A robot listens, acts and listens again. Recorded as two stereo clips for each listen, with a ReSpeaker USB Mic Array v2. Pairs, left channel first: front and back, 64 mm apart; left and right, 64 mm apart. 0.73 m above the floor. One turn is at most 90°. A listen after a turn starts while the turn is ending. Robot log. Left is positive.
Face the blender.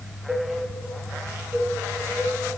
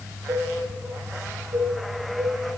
cmd idle
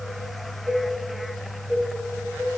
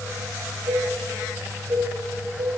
cmd idle
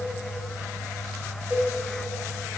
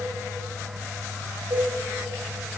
end: I can't make out a blender, only a cowbell.